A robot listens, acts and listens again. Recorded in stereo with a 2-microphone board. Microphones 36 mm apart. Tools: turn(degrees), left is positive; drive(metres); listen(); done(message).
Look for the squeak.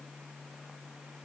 listen()
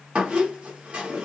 turn(degrees=-30)
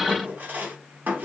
turn(degrees=-125)
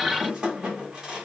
turn(degrees=-25)
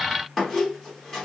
done("Found it: a squeak, straight ahead, 1 to 2 m away.")